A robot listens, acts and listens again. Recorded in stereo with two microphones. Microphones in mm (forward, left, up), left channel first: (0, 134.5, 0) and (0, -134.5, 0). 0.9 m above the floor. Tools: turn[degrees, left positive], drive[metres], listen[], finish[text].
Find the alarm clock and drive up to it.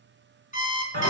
Thought: The alarm clock: about 25° left or 155° left.
Action: turn[25]
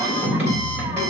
Action: listen[]
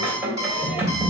Thought: So it is at 125° left.
Action: turn[125]
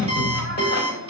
Thought: The alarm clock is now 20° right.
Action: turn[-20]
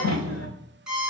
Action: drive[1.0]
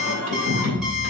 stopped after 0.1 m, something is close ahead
Action: listen[]
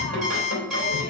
Action: finish[Something is in my way. I am facing the alarm clock but have not reached it.]